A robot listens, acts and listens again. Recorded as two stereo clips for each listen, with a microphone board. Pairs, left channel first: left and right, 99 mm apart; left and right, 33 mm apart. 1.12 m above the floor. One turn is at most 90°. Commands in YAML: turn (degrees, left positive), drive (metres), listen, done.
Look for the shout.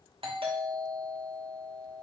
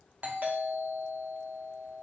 listen: true
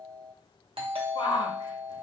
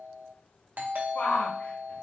turn: 60
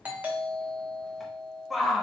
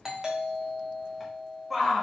done: "Found it: a shout, straight ahead, under 1 m away."